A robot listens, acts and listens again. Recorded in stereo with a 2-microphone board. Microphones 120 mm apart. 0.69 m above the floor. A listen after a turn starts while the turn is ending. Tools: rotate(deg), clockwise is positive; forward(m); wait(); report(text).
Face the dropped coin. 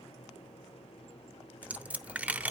rotate(30)
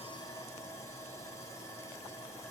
wait()
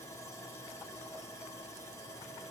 report("I heard a dropped coin, but can't make it out now. It was about 20° left or 140° right.")